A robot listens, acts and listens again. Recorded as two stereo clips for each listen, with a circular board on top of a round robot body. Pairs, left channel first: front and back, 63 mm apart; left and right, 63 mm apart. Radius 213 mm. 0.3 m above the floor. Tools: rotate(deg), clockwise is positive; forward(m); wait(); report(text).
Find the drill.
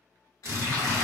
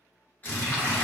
rotate(-140)
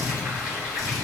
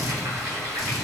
wait()
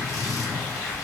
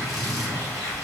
report("Found it: a drill, straight ahead, 1 to 2 m away.")